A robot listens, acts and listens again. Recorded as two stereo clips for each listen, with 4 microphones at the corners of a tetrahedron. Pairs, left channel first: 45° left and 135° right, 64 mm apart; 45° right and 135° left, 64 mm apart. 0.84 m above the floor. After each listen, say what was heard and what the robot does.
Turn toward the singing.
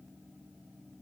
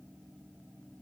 Keep listening.
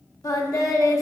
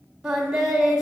The singing: 55° left. Turn 55° left.
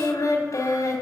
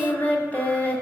The singing is now 15° left. Turn 15° left.
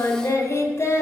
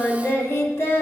Facing the singing.